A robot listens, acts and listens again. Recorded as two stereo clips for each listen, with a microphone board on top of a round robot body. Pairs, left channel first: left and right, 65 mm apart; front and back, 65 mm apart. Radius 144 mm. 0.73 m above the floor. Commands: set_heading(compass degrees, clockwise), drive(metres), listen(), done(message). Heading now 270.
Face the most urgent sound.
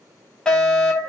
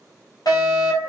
set_heading(260)
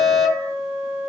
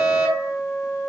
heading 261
done("Found it: a fire alarm, straight ahead, over 4 m away.")